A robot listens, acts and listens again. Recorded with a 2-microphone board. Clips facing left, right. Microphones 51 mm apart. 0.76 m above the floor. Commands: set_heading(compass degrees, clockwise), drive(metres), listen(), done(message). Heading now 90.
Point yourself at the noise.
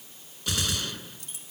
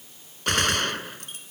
set_heading(150)
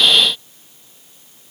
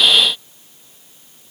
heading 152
listen()
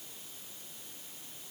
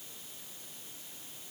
done("I heard a gunshot, but can't make it out now. It was about straight ahead or 60° right.")